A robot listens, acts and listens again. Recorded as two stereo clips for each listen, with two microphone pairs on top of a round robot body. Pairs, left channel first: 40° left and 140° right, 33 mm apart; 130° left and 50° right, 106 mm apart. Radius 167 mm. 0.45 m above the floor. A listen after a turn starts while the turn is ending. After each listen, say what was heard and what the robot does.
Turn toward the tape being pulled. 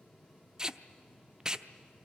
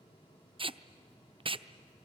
The tape being pulled: 80° right. Turn 80° right.
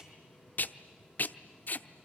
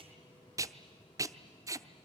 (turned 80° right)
The tape being pulled is now 10° left. Turn 10° left.
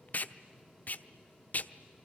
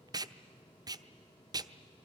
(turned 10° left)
Facing the tape being pulled, under 1 m away.